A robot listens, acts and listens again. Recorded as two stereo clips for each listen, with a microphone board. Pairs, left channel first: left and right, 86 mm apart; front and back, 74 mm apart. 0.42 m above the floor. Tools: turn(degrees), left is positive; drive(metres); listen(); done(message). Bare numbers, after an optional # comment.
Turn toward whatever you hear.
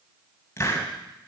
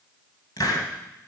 # The hiss: 30° left.
turn(30)
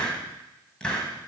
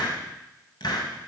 # The hiss is now 10° left.
turn(10)
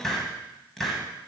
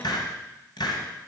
done("Found it: a hiss, straight ahead.")